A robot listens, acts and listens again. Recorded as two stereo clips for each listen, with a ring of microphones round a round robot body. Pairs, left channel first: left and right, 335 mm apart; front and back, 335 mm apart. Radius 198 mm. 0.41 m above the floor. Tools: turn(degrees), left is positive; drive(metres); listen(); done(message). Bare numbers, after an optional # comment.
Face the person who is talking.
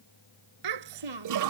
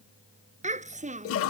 # The child speaking: 110° right.
turn(-110)
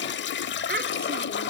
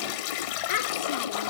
# The child speaking is now 30° right.
turn(-30)
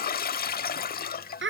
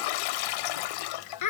# The child speaking is now 35° right.
turn(-35)
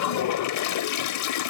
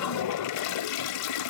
listen()
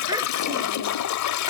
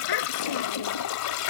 listen()
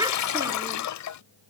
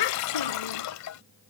# The child speaking is now 10° right.
turn(-10)
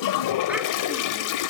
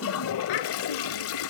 listen()
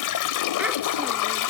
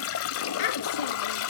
listen()
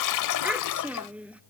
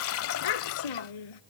done("Facing the child speaking.")